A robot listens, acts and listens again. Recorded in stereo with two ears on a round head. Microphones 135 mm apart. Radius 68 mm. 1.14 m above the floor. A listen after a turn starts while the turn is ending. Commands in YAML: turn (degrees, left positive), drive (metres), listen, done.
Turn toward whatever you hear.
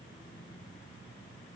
listen: true
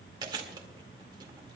turn: -30
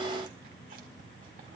listen: true
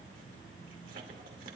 listen: true
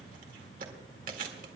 turn: -120
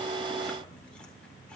listen: true
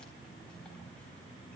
listen: true
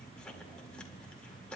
done: "I heard chewing from this way, but can't make it out now."